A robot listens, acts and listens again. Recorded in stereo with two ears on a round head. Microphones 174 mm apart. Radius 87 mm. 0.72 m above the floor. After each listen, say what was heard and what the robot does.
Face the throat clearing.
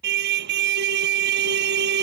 Keep listening.
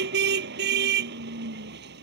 Keep listening.
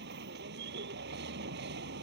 I can't make out throat clearing, only a car horn.